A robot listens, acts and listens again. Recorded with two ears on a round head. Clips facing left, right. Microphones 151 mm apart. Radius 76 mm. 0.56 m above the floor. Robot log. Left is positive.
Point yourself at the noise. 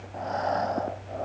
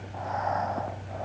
note: The breathing: about 40° left or 140° left.
cmd yaw +40
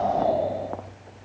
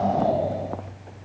end: Found it: breathing, straight ahead.